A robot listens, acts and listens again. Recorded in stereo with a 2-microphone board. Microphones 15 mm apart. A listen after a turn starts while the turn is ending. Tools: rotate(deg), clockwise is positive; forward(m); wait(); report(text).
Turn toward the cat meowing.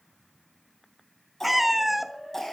rotate(30)
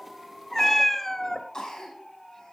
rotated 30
rotate(-15)
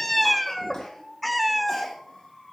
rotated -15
report("Found it: a cat meowing, straight ahead.")